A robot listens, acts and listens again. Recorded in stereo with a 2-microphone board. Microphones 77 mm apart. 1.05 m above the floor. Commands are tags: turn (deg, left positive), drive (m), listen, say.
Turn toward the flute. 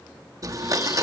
<listen/>
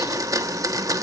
<listen/>
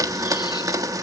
<say>I can't make out a flute to turn to.</say>